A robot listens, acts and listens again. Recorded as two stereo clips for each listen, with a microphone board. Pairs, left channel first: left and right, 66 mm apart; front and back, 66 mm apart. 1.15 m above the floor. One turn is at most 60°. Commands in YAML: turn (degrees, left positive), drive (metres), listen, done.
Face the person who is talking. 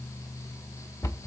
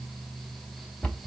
listen: true
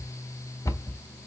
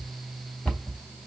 listen: true
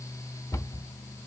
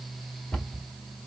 done: "I can't make out anyone speaking to turn to."